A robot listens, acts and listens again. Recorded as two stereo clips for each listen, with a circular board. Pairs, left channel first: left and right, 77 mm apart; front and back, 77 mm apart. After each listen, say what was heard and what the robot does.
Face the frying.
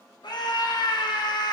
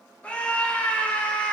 Keep listening.
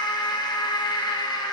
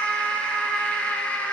Keep listening.
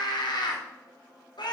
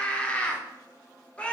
I can't make out frying, only a scream.